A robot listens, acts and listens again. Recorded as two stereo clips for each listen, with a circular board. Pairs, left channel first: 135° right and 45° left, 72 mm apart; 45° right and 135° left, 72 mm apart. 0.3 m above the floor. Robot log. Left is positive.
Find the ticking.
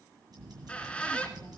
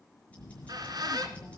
note: The ticking: 25° left.
cmd yaw +25
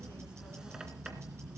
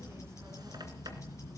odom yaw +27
end: Facing the ticking, over 4 m away.